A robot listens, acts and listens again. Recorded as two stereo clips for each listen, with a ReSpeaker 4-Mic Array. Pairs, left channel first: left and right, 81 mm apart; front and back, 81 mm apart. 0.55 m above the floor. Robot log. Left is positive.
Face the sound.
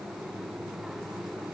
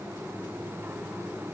cmd idle
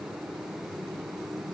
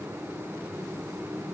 cmd idle
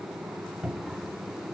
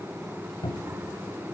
note: The cupboard door: 10° right.
cmd yaw -10
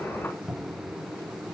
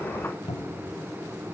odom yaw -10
end: Found it: a cupboard door, straight ahead.